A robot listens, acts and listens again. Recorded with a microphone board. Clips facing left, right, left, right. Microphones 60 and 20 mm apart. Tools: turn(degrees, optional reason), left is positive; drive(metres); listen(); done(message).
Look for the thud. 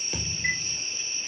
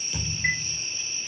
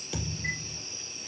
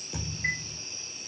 turn(degrees=40, reason="The thud: about 40° left or 140° left.")
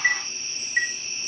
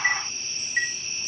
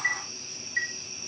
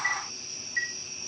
listen()
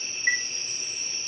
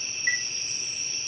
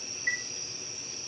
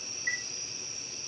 done("I heard a thud, but can't make it out now. It was about straight ahead or 100° left.")